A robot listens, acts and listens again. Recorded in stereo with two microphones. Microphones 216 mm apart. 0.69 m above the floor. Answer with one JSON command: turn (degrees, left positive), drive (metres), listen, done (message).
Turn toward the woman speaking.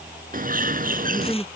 {"turn": 30}
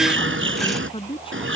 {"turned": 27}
{"turn": 155}
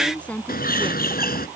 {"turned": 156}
{"done": "Found it: a woman speaking, straight ahead."}